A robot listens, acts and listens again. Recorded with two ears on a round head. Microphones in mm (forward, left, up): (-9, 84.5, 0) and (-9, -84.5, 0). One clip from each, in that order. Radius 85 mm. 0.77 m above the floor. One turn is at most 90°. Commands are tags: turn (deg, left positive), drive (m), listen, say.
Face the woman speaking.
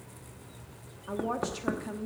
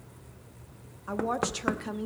<turn deg="-35"/>
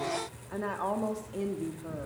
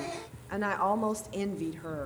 <turn deg="-90"/>
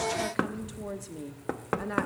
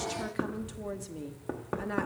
<say>Found it: a woman speaking, straight ahead.</say>